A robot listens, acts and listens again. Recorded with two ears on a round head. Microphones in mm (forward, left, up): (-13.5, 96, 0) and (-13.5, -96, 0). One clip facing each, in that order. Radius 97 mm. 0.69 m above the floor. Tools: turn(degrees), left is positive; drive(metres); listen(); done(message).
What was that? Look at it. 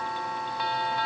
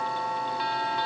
listen()
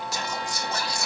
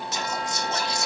turn(degrees=-20)
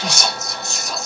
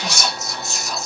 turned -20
done("Found it: whispering, straight ahead.")